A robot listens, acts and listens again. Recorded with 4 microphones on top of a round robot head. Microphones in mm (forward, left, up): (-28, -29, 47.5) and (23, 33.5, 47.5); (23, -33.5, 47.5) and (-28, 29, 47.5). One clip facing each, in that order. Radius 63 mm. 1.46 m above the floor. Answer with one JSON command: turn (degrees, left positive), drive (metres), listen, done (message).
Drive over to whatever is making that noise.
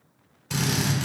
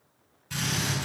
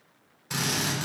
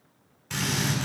{"turn": -125}
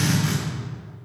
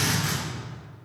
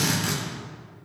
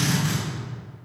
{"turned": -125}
{"turn": -30}
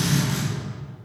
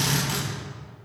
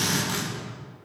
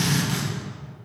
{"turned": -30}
{"turn": 15}
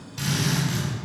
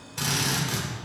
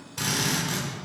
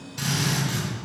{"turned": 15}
{"drive": 1.0}
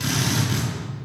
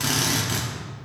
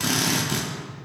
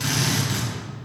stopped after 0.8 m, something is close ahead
{"done": "Arrived at the drill, straight ahead."}